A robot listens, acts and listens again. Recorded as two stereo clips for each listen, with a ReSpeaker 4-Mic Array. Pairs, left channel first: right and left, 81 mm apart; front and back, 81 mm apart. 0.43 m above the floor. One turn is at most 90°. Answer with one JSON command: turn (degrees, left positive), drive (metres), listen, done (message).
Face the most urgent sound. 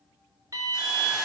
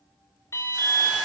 {"turn": 45}
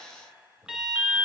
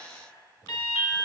{"turn": 10}
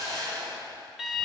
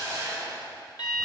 {"done": "Facing the alarm, 1 to 2 m away."}